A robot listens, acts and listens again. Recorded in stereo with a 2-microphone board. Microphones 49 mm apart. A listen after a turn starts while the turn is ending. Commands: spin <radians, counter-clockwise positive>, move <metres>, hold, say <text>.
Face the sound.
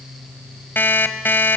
spin 0.79
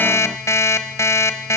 spin 1.57
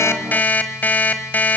spin 0.70
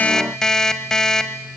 spin 0.17
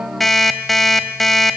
say Found it: an alarm clock, straight ahead, 1 to 2 m away.